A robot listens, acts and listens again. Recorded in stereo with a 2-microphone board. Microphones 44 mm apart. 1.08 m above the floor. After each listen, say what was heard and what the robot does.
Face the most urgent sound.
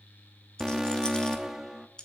Turn 30° right.
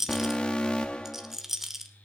So it is at 25° left. Turn 25° left.
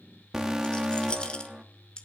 The alarm is now 10° right. Turn 10° right.
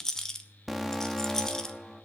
Facing the alarm.